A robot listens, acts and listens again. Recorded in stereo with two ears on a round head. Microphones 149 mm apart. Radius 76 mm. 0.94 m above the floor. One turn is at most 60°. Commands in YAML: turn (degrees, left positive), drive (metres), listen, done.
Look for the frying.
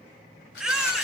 listen: true
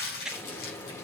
turn: 15
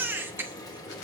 turn: 60
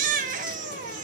turn: 60
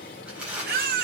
turn: 55
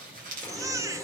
turn: 10
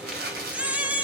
done: "Found it: frying, straight ahead, 1 to 2 m away."